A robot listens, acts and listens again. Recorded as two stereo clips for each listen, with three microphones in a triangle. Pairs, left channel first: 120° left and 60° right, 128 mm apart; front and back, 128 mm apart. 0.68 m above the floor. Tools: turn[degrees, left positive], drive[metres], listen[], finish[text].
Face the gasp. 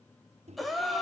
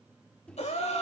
Thought: The gasp: 30° left.
Action: turn[30]
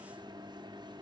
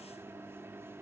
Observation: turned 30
Action: finish[Facing where the gasp came from. I can't hear it now.]